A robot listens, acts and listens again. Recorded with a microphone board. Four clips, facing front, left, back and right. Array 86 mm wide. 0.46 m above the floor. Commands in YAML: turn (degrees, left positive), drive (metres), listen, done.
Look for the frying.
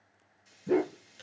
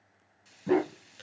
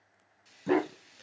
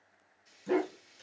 turn: 130
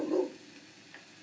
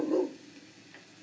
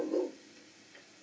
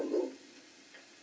turn: 25
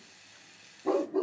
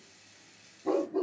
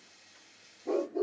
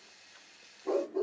turn: -15
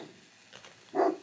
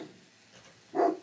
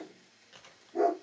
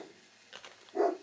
done: "Facing the frying, 1 to 2 m away."